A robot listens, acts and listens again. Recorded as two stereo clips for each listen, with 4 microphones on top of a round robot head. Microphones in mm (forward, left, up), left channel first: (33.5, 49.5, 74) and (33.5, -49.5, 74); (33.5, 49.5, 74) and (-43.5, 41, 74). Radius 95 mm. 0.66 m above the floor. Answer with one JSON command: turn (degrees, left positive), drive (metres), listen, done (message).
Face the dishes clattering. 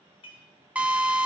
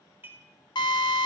{"turn": 125}
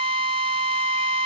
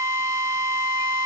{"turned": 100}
{"turn": 25}
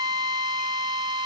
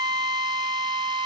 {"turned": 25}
{"listen": true}
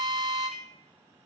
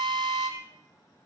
{"done": "Facing where the dishes clattering came from. I can't hear it now."}